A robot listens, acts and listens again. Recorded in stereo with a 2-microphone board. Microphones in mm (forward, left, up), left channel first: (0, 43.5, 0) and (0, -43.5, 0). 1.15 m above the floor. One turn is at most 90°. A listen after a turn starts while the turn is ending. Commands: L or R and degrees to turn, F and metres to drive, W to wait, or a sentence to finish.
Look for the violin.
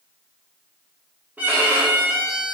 R20
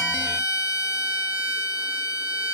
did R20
Found it: a violin, straight ahead, under 1 m away.